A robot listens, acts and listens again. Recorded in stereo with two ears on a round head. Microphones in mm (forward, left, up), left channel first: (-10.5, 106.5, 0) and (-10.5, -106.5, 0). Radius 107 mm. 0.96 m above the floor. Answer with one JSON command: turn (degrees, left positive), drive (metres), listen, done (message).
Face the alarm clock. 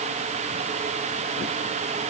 {"listen": true}
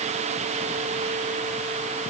{"listen": true}
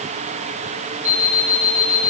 {"turn": -30}
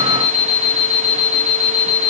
{"turn": -115}
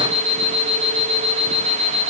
{"done": "Found it: an alarm clock, straight ahead."}